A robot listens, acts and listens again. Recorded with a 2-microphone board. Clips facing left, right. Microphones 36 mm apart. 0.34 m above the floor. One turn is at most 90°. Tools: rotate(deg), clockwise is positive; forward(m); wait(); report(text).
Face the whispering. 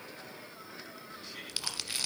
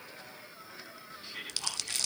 rotate(15)
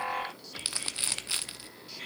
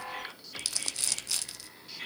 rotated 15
report("Facing the whispering, 2 to 4 m away.")